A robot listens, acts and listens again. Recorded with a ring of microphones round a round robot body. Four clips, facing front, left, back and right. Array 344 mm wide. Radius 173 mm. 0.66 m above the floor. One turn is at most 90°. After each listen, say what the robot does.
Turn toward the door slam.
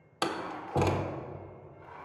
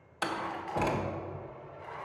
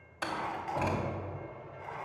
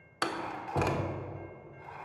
Turn 20° right.
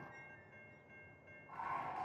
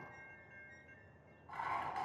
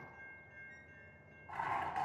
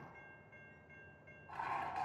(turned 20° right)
Facing where the door slam came from. I can't hear it now.